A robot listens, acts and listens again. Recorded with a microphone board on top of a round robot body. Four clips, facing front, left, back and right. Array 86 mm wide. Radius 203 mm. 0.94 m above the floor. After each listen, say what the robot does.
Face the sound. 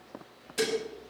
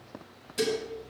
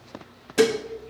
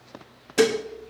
Turn 120° right.
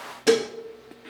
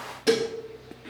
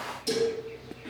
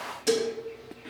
Turn 20° left.
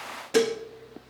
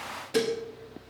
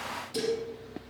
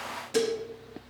Found it: dishes clattering, straight ahead.